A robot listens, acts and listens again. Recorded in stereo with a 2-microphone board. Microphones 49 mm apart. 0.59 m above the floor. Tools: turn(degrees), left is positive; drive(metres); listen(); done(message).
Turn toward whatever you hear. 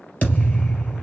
turn(degrees=30)
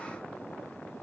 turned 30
listen()
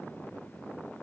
done("I heard a thud, but can't make it out now. It was about straight ahead or 120° left.")